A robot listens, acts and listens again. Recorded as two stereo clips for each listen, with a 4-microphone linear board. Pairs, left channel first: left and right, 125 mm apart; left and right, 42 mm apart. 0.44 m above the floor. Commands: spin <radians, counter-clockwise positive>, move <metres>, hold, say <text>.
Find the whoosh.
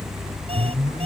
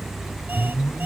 spin 0.52
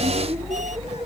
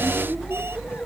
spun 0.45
hold
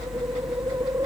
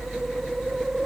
hold
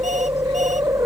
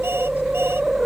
spin -0.35
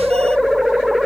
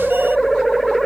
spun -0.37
say Found it: a whoosh, straight ahead.